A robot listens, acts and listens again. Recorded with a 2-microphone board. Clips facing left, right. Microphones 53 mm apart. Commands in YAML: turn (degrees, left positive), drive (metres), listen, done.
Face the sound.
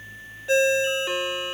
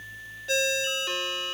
turn: 20
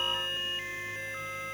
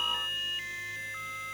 listen: true
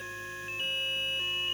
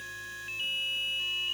listen: true
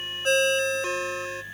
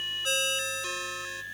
turn: 140
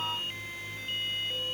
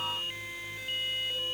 listen: true
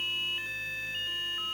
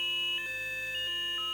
listen: true
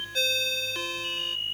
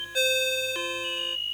turn: -15
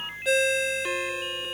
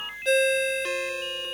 done: "Found it: a ringtone, straight ahead, under 1 m away."